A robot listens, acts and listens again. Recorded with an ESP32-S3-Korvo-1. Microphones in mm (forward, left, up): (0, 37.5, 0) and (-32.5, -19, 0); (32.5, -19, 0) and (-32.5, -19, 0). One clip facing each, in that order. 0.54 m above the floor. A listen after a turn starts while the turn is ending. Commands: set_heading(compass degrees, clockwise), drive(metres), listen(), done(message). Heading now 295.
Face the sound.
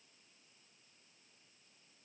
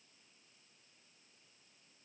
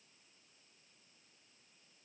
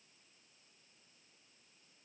listen()
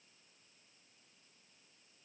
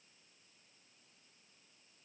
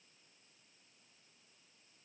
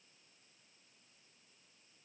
listen()
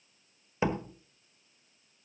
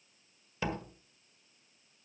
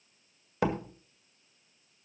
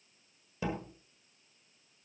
done("Found it: a door slam, straight ahead, 1 to 2 m away.")